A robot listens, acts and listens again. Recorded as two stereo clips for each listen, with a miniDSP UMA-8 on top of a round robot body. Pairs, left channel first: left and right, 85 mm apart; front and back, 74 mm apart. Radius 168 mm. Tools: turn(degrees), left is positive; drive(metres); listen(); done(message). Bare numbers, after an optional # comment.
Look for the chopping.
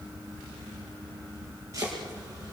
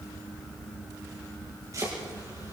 # The chopping: 140° right.
turn(-140)
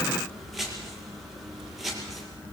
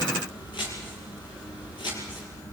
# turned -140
done("Facing the chopping.")